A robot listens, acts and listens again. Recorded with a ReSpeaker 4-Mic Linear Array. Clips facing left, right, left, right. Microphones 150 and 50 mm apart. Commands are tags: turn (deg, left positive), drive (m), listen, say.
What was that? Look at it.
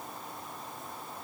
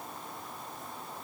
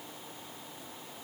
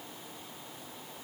<listen/>
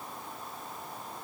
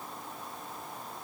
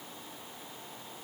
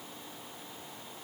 <listen/>
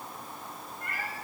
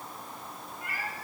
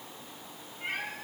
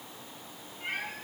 <turn deg="-30"/>
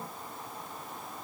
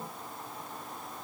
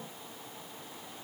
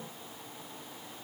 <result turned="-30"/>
<listen/>
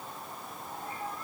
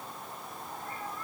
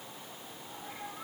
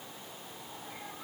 <turn deg="30"/>
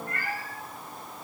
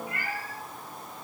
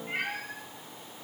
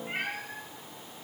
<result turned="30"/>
<turn deg="-10"/>
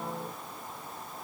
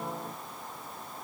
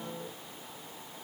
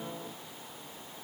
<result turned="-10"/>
<listen/>
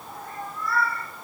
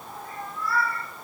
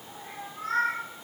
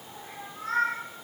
<say>Found it: a cat meowing, straight ahead.</say>